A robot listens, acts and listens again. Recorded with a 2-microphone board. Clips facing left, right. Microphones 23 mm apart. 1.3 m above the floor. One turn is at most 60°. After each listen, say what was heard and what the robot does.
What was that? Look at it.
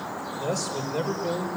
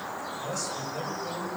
Turn 60° left.
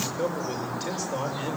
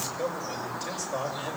So it is at 30° left. Turn 30° left.
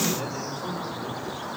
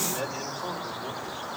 The man speaking is now 15° right. Turn 15° right.
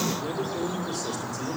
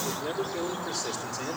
The man speaking is now 15° right. Turn 15° right.
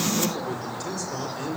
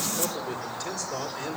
Found it: a man speaking, straight ahead.